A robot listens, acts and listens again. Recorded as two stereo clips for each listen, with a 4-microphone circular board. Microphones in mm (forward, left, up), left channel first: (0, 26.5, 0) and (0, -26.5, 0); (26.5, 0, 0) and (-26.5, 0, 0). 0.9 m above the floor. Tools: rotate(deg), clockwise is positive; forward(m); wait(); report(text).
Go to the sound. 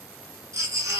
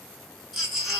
rotate(90)
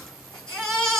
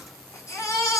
rotate(-15)
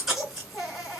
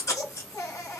forward(1.0)
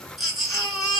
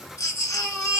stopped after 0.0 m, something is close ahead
report("Something is in my way. I am facing the baby crying but have not reached it.")